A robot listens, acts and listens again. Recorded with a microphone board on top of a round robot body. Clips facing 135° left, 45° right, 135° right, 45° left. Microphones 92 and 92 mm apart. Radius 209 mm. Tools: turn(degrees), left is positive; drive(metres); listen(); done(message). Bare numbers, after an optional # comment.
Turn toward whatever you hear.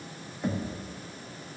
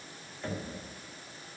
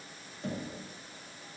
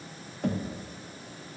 # The knocking: 60° left.
turn(60)
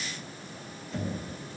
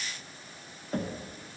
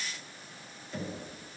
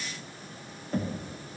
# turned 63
done("Found it: knocking, straight ahead, 1 to 2 m away.")